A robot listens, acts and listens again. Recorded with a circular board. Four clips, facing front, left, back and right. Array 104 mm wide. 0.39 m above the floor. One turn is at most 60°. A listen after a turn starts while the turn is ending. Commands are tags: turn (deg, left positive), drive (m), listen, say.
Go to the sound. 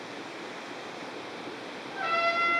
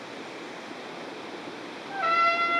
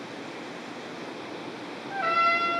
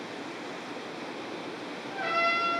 <turn deg="60"/>
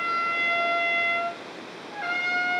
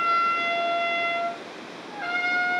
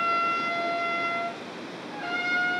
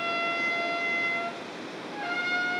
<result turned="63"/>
<turn deg="50"/>
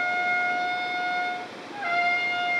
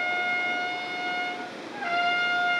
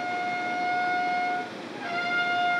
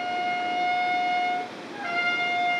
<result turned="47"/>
<drive m="1.0"/>
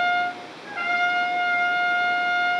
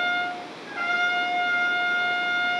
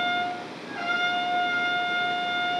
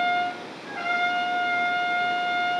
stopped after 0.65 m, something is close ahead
<turn deg="10"/>
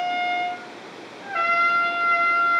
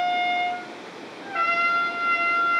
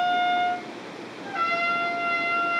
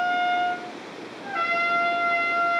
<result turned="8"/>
<say>Arrived at the trumpet, straight ahead.</say>